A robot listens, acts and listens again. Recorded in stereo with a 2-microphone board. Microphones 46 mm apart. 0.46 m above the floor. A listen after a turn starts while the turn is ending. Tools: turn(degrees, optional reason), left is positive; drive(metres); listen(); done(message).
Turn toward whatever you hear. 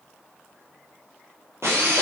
turn(degrees=-75, reason="The drill: about 75° right or 105° right.")
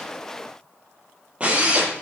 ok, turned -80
turn(degrees=-25, reason="So it is at 25° right.")
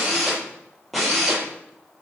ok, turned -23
done("Facing the drill, over 4 m away.")